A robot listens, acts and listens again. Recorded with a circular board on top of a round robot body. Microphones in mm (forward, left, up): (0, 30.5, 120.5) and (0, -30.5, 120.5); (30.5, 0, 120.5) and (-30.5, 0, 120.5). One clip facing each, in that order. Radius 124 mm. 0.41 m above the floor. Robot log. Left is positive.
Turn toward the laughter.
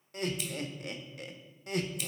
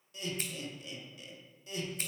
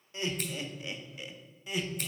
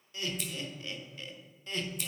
note: The laughter: 85° left.
cmd yaw +85
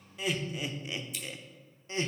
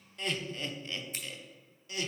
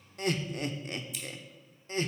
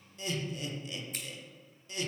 note: The laughter is now 40° left.
cmd yaw +40
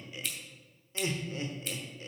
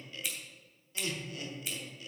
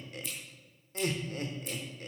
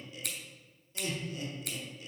note: The laughter is now 35° left.
cmd yaw +35
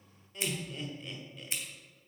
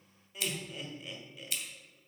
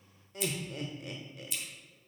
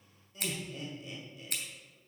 end: Facing the laughter, 1 to 2 m away.